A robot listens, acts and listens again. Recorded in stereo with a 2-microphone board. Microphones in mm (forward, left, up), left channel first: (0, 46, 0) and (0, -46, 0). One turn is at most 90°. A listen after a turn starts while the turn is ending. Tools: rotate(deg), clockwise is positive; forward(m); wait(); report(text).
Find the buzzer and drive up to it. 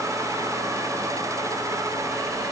wait()
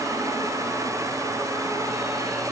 wait()
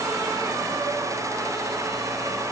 report("I can't make out a buzzer.")